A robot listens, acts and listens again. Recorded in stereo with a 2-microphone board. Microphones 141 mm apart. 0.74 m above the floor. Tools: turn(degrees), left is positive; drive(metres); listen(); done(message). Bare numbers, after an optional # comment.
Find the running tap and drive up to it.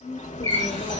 # The running tap: about 45° right or 135° right.
turn(-45)
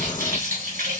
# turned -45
# So it is at 90° right.
turn(-90)
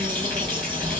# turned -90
listen()
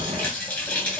# The running tap is now 15° left.
turn(15)
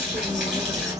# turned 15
listen()
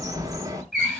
drive(1.0)
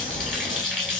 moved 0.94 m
drive(1.0)
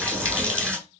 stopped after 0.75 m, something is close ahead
# The running tap is now 10° left.
turn(10)
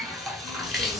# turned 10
done("I am next to the running tap.")